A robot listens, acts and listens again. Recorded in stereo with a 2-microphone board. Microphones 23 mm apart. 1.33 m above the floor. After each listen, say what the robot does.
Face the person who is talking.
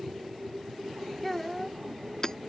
Turn 30° left.
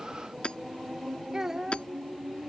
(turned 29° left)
Turn 20° right.
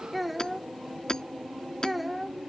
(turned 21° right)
Found it: a child speaking, straight ahead.